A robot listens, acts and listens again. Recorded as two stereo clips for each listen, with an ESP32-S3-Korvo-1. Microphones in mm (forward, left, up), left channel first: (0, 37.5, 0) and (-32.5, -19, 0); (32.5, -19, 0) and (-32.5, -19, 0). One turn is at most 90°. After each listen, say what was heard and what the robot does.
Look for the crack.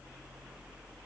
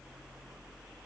Keep listening.
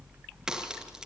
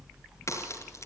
The crack: 40° right. Turn 40° right.
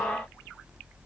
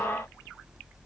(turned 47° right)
Nothing new. It was at 10° left. Turn 10° left.
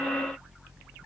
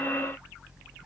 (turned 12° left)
Facing where the crack came from. I can't hear it now.